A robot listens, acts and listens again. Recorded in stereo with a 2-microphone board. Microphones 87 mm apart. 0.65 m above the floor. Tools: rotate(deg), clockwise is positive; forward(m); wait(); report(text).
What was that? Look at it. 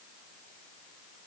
wait()
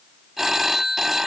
rotate(30)
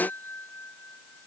wait()
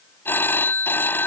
rotate(-25)
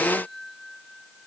wait()
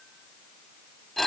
report("Facing the phone ringing.")